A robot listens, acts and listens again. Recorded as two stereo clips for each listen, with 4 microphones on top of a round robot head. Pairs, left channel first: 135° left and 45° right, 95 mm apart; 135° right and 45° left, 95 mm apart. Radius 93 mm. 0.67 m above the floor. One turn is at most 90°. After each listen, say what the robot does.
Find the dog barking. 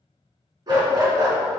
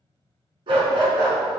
Facing the dog barking, 2 to 4 m away.